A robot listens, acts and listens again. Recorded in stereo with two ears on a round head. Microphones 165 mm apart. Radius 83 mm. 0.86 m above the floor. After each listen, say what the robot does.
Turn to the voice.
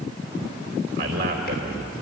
Turn 55° right.
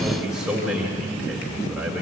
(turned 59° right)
Found it: a man speaking, straight ahead, 2 to 4 m away.